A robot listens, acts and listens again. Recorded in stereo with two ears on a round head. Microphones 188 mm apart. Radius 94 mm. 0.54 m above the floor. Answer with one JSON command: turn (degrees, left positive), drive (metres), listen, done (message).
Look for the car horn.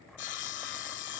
{"listen": true}
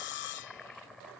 {"listen": true}
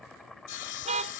{"turn": -30}
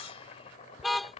{"done": "Facing the car horn."}